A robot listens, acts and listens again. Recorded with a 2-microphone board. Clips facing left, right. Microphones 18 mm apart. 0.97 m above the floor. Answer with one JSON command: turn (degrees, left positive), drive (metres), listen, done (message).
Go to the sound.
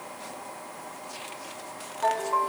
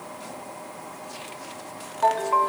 {"turn": -55}
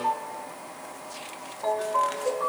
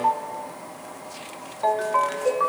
{"turn": -70}
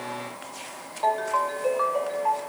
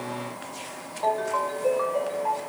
{"turn": 20}
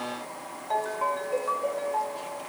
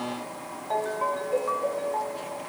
{"drive": 1.0}
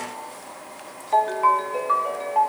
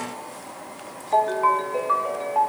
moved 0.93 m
{"turn": 10}
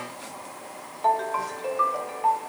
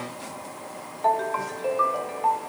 {"drive": 1.0}
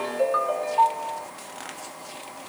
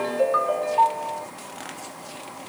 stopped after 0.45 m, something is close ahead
{"done": "Arrived at the ringtone, straight ahead."}